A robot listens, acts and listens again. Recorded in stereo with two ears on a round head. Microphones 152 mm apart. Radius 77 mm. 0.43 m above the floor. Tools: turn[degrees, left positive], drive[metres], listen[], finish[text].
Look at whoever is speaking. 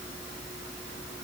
Action: listen[]
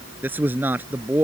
Action: turn[-30]
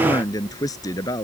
Thought: So it is at 20° left.
Action: turn[20]
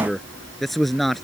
Action: finish[Found it: a man speaking, straight ahead.]